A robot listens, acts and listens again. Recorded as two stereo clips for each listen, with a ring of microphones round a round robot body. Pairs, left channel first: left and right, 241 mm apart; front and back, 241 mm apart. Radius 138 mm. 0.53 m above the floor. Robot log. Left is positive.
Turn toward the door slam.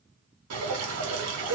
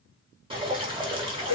cmd idle
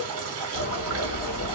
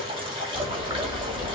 note: The door slam: 100° left.
cmd yaw +100
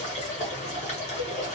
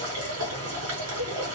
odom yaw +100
end: Facing where the door slam came from. I can't hear it now.